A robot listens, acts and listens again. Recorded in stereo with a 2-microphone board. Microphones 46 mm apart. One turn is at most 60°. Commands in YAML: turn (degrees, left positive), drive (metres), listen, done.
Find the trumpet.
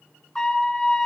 turn: 30
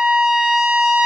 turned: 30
turn: -15
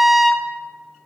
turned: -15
done: "Facing the trumpet."